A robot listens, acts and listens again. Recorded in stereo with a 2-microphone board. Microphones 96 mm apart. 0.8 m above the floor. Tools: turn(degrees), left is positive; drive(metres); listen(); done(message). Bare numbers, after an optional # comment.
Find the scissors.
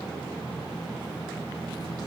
listen()
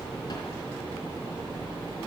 listen()
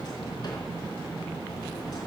done("I can't make out scissors to turn to.")